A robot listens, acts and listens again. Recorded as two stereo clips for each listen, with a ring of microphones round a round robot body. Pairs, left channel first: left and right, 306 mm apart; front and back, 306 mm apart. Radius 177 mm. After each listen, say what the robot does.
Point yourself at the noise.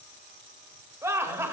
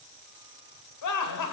Turn 10° right.
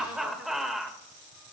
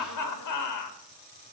Facing the laughter.